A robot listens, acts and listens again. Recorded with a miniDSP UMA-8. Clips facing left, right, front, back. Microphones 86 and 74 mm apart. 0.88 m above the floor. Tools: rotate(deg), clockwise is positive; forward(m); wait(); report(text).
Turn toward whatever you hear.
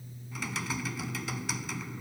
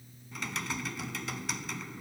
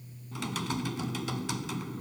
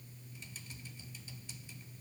report("Found it: typing on a keyboard, straight ahead.")